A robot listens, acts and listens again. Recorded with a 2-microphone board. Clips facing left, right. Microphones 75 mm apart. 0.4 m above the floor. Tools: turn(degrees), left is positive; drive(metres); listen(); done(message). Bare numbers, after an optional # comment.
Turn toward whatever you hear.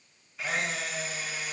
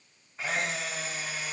# The camera shutter: about 35° right or 145° right.
turn(-35)
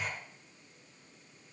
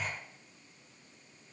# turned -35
done("Facing the camera shutter, over 4 m away.")